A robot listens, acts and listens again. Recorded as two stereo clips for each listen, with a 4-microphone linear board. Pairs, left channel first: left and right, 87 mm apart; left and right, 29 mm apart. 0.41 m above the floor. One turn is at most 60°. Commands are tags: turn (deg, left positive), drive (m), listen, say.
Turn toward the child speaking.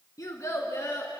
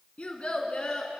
<turn deg="35"/>
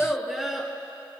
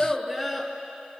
<say>Found it: a child speaking, straight ahead, 2 to 4 m away.</say>